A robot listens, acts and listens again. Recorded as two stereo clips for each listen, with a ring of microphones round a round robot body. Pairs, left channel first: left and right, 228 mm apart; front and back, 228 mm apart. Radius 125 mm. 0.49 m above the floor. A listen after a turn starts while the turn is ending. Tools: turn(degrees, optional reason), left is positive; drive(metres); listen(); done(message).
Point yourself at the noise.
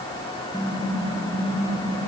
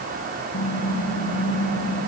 done("Found it: typing on a keyboard, straight ahead, over 4 m away.")